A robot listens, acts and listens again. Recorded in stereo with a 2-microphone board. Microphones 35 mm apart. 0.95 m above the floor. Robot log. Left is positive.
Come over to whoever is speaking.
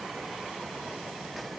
cmd idle
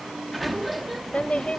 note: The woman speaking: about 40° left or 140° left.
cmd yaw +40
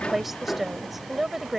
cmd fwd 1.0
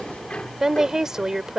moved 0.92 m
note: The woman speaking is now 15° right.
cmd yaw -15
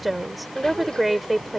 cmd fwd 1.0
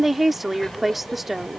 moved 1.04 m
cmd fwd 1.0
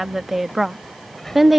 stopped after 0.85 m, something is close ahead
end: Arrived at the woman speaking, straight ahead.